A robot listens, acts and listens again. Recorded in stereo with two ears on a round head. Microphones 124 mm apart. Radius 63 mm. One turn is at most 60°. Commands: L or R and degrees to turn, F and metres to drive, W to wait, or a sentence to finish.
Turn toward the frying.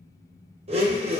W
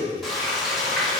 L30
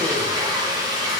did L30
R30
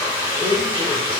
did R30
R15
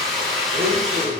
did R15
Found it: frying, straight ahead.